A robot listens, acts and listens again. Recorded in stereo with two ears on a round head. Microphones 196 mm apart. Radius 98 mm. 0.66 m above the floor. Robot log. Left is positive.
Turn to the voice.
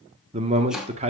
note: The man speaking: about 30° right or 150° right.
cmd yaw -30
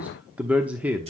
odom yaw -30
end: Facing the man speaking.